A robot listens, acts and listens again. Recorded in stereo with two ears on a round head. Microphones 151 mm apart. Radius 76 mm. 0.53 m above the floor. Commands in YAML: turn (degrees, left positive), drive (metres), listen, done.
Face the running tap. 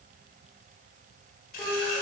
turn: 55
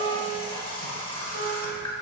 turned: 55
turn: 40
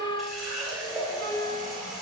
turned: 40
done: "Facing the running tap, under 1 m away."